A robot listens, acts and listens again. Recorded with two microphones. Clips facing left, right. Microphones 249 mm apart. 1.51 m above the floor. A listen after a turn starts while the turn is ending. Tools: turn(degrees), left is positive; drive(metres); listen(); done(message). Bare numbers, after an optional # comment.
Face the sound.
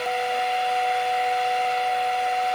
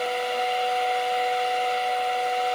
listen()
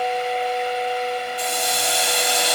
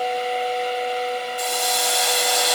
# The hiss: about 20° left or 160° left.
turn(20)
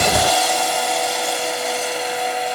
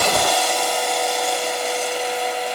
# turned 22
done("Found it: a hiss, straight ahead, over 4 m away.")